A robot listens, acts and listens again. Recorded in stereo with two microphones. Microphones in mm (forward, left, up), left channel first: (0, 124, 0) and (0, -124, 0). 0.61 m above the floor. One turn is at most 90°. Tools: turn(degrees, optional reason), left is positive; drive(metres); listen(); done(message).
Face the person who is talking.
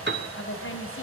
turn(degrees=55, reason="The woman speaking: about 55° left or 125° left.")
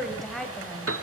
done("Facing the woman speaking.")